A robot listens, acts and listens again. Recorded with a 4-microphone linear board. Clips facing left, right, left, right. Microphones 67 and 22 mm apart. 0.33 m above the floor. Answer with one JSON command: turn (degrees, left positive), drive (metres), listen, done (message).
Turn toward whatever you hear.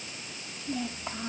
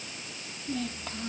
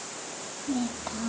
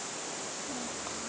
{"turn": 20}
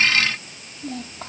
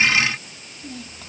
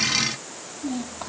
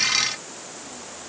{"turn": 135}
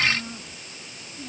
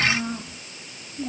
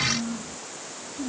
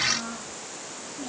{"turn": -35}
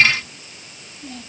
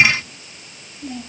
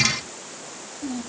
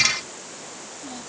{"turn": -10}
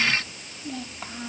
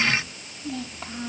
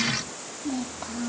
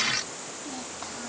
{"done": "Found it: a child speaking, straight ahead."}